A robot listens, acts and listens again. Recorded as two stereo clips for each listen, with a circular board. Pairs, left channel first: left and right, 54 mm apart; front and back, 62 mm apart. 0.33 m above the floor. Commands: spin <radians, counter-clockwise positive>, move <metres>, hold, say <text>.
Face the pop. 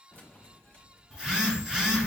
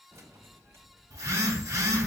hold
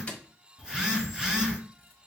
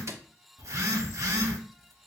hold
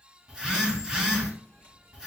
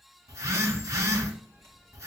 say I can't make out a pop to turn to.